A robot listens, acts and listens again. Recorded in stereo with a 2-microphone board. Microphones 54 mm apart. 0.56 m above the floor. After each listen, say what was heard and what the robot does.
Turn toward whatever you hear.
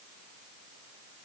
Keep listening.
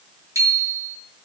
Turn 90° right.
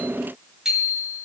So it is at 10° right. Turn 10° right.
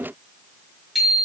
Facing the bicycle bell.